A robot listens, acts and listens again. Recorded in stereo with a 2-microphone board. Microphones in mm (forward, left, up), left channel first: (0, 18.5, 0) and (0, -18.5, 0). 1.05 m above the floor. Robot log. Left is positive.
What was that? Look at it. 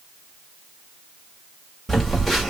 cmd yaw +30
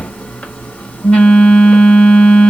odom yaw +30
note: So it is at 145° left.
cmd yaw +145
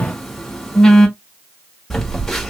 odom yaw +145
end: Facing the phone buzzing.